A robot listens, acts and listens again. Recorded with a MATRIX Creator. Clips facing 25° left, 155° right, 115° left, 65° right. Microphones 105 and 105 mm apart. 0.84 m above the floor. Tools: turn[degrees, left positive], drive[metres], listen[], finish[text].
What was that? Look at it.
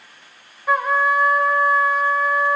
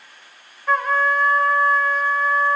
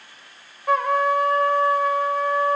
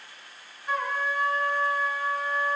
Thought: The trumpet: 105° left.
Action: turn[105]
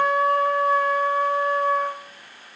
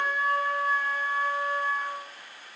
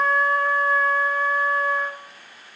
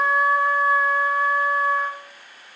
Thought: The trumpet is now 15° left.
Action: turn[15]
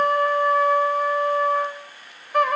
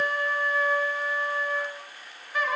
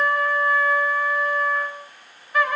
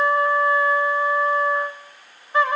Action: finish[Facing the trumpet, 1 to 2 m away.]